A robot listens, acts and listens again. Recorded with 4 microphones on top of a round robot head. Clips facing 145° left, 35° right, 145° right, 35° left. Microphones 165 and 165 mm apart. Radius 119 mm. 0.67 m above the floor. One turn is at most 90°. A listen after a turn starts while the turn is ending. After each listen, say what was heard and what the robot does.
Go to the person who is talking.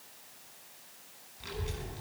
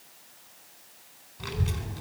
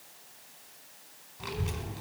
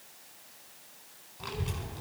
The child speaking: 60° right. Turn 60° right.
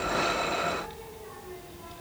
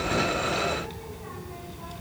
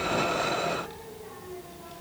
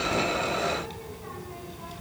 Drive 1.0 m forward.
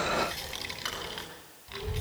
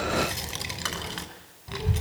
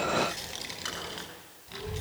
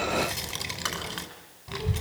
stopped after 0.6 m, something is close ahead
Blocked. The child speaking is further on, straight ahead.